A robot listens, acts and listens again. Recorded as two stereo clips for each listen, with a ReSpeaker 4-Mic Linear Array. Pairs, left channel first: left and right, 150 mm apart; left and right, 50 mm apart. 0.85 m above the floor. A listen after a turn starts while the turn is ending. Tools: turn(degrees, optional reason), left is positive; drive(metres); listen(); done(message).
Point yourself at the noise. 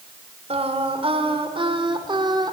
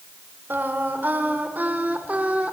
turn(degrees=-30, reason="The singing: about 30° right or 150° right.")
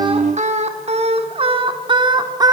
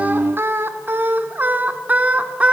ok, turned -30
turn(degrees=-25, reason="The singing: about 25° right or 155° right.")
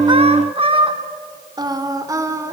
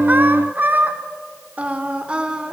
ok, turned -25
turn(degrees=-20, reason="The singing: about 20° right or 160° right.")
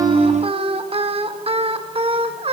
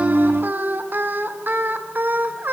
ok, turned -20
turn(degrees=-40, reason="The singing: about 40° right or 140° right.")
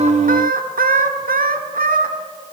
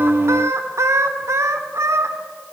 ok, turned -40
turn(degrees=-100, reason="So it is at 100° right.")
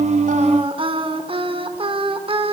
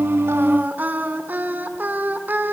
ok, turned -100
turn(degrees=-40, reason="The singing is now 40° right.")
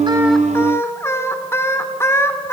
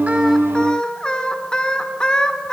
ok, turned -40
turn(degrees=20, reason="The singing is now 20° left.")
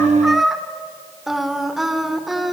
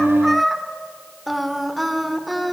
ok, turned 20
done("Found it: singing, straight ahead.")